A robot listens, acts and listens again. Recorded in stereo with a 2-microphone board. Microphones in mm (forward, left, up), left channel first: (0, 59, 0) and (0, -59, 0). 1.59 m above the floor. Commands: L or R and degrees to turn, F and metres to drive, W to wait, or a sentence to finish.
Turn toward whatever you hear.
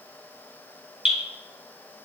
R30
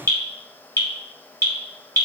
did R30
L25
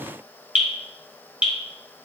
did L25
R10
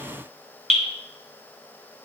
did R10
Facing the dripping.